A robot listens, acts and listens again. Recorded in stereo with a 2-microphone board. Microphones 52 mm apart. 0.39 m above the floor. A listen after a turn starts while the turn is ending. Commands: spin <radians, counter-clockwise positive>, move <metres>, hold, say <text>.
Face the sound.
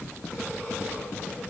hold
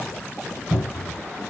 spin -0.44
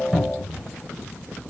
say Facing the cupboard door.